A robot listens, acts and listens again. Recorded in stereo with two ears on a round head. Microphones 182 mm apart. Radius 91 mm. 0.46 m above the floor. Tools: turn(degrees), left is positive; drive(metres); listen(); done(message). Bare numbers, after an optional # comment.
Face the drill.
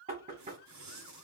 listen()
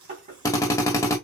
turn(30)
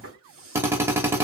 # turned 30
# So it is at 15° right.
turn(-15)
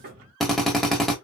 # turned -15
done("Facing the drill.")